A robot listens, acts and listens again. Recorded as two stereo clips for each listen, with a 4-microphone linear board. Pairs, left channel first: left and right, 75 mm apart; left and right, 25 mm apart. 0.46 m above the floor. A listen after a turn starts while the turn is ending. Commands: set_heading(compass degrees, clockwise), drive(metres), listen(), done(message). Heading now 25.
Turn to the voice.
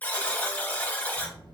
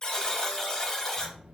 set_heading(95)
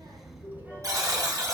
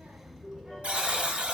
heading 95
set_heading(120)
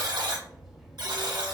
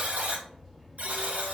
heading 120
done("Facing the child speaking, under 1 m away.")